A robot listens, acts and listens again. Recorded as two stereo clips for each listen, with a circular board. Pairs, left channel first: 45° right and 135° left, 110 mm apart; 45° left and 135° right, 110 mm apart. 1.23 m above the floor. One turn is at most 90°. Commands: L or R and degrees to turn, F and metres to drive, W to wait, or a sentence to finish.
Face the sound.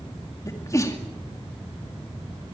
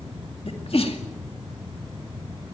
L15
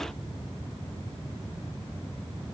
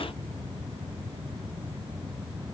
I heard a sneeze from this way, but can't make it out now.